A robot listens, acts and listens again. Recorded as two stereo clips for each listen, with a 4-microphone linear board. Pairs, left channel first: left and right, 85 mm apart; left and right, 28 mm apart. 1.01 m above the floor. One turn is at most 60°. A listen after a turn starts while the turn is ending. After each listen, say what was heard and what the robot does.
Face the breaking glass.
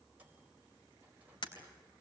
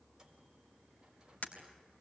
The breaking glass: about 60° left or 120° left. Turn 60° left.
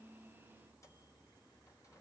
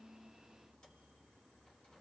Keep listening.
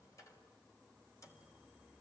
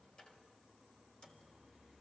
I heard breaking glass, but can't make it out now. It was about straight ahead or 60° left.